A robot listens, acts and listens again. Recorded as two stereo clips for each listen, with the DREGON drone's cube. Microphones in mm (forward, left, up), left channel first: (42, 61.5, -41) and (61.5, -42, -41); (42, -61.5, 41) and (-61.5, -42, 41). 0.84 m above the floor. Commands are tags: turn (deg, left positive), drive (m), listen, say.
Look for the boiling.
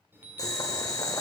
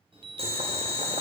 <turn deg="155"/>
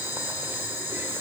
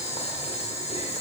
<turn deg="-10"/>
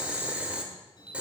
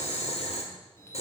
<say>Found it: boiling, straight ahead, 1 to 2 m away.</say>